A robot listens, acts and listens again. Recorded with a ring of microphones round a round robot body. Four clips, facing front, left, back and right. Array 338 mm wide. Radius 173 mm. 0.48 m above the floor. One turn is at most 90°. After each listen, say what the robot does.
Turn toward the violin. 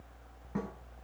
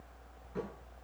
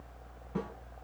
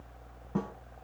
Keep listening.
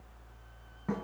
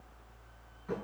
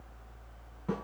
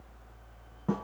Keep listening.
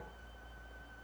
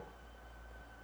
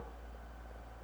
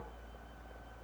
I can't make out a violin, only a snare drum.